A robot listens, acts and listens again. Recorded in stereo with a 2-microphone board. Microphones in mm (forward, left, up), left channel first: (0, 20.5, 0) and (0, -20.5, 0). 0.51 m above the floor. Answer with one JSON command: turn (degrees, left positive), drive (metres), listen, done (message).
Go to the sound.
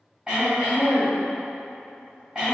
{"turn": -20}
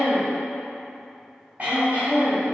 {"turn": -140}
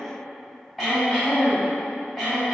{"drive": 1.0}
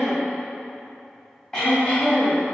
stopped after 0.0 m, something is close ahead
{"turn": 15}
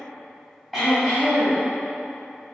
{"done": "Something is in my way. I am facing the throat clearing but have not reached it."}